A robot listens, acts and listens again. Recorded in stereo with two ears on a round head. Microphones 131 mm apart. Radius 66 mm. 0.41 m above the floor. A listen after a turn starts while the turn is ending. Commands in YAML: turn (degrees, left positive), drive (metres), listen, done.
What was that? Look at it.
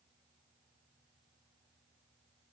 listen: true
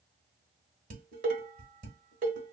turn: -60
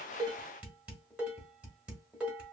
turn: -10
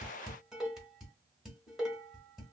done: "Found it: dishes clattering, straight ahead."